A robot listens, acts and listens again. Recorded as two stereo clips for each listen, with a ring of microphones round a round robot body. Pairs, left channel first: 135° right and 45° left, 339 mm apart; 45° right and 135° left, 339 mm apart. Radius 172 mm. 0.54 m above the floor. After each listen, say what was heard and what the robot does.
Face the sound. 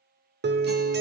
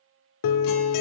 The guitar: 15° right. Turn 15° right.
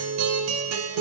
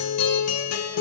Facing the guitar, under 1 m away.